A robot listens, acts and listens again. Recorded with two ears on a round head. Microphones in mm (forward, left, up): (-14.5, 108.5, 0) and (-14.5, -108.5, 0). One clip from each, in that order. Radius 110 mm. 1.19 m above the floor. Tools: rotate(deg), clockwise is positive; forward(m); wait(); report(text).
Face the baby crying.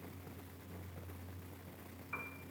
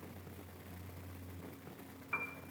wait()
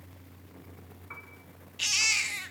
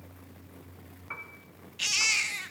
rotate(-30)
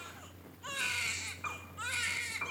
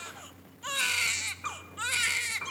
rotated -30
rotate(20)
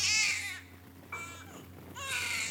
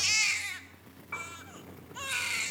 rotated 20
report("Facing the baby crying.")